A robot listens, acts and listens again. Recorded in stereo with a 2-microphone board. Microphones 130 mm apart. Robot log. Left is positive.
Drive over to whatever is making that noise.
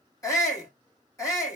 note: The shout: about 25° left or 155° left.
cmd yaw +25
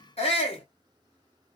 note: So it is at 130° left.
cmd yaw +130
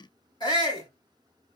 note: The shout is now 35° left.
cmd yaw +35
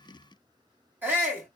note: The shout is now 15° right.
cmd yaw -15
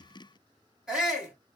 cmd fwd 1.0
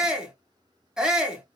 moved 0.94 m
cmd fwd 1.0
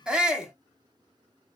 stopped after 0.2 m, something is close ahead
end: I am next to the shout.